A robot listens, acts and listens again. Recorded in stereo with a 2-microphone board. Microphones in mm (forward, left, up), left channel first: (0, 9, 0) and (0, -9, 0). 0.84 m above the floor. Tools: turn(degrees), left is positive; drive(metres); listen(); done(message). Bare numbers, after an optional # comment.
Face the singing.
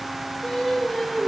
# The singing: about 35° left or 145° left.
turn(35)
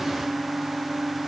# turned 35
# So it is at 10° right.
turn(-10)
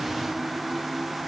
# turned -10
listen()
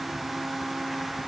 listen()
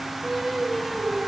# The singing is now 15° right.
turn(-15)
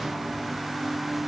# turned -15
listen()
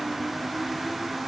listen()
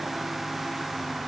done("I heard singing from this way, but can't make it out now.")